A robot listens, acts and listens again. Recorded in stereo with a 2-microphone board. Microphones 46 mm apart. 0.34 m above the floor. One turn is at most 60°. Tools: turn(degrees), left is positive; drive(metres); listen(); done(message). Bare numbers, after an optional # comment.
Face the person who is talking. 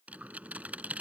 listen()
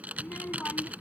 # The child speaking: about 45° left or 135° left.
turn(45)
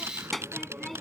done("Facing the child speaking.")